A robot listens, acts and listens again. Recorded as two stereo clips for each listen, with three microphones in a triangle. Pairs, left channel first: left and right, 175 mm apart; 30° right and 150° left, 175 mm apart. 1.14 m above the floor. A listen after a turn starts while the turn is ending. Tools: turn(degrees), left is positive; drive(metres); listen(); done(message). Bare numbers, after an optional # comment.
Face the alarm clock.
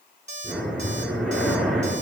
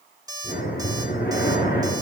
# The alarm clock: 140° right.
turn(-140)
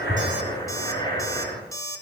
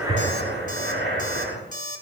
# The alarm clock is now 15° left.
turn(15)
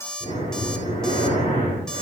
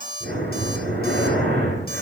done("Facing the alarm clock.")